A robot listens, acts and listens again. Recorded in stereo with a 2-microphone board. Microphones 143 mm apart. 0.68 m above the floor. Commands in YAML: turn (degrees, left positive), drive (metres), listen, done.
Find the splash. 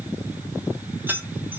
listen: true
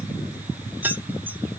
listen: true
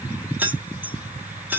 done: "I can't make out a splash, only keys jangling."